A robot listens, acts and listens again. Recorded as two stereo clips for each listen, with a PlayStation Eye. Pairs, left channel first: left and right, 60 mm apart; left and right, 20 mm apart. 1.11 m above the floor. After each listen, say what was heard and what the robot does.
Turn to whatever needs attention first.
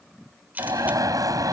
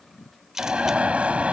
Turn 90° right.
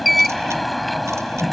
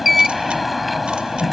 Facing the alarm.